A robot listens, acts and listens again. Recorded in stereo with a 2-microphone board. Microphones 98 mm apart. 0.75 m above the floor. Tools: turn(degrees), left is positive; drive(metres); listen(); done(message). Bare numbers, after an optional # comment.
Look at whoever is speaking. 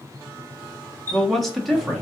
turn(30)
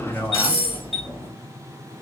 # So it is at 150° left.
turn(150)
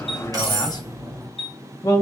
# The man speaking is now 50° left.
turn(50)
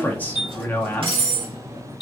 # The man speaking is now 20° left.
turn(20)
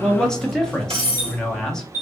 # The man speaking is now 10° left.
turn(10)
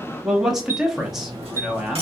done("Found it: a man speaking, straight ahead, under 1 m away.")